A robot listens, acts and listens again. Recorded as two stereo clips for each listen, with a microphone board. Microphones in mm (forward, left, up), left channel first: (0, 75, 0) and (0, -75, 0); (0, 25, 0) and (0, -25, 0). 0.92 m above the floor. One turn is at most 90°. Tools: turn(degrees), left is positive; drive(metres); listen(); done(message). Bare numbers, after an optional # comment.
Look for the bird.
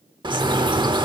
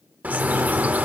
# The bird: about 30° right or 150° right.
turn(-30)
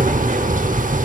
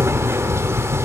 # So it is at 115° right.
turn(-90)
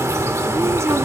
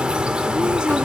# The bird is now 20° right.
turn(-20)
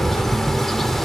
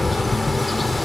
done("Facing the bird, 1 to 2 m away.")